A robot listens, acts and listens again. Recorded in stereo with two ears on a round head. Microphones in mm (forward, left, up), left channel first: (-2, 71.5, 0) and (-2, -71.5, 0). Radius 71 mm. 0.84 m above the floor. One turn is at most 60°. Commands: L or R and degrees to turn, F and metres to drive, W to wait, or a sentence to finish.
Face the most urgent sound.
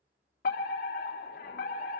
L60
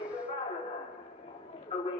L45
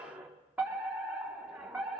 R10
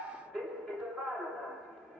Found it: a fire alarm, straight ahead.